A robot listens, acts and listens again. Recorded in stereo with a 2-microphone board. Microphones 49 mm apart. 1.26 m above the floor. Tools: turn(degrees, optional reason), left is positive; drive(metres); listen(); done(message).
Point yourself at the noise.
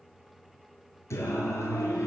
turn(degrees=90)
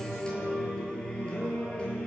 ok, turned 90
turn(degrees=20, reason="So it is at 20° left.")
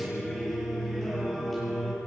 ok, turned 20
done("Facing the singing.")